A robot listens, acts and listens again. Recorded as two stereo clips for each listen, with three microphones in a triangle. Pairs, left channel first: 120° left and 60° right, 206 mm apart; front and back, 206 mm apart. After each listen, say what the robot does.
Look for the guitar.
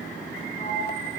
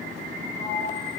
Keep listening.
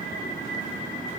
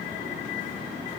Keep listening.
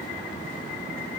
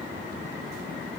I can't make out a guitar.